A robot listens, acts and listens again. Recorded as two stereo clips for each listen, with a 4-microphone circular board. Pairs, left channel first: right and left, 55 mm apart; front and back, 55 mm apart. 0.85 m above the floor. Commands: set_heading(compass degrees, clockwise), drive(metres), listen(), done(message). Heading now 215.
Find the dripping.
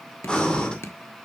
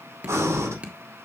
set_heading(330)
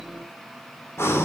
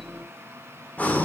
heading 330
listen()
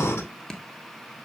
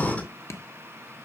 set_heading(345)
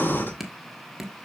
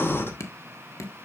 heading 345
done("Facing the dripping, 1 to 2 m away.")